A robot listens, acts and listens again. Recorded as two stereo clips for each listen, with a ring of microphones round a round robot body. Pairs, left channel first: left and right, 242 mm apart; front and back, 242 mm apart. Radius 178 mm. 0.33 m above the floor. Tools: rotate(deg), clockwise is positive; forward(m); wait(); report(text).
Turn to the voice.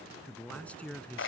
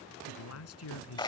report("Found it: a man speaking, straight ahead.")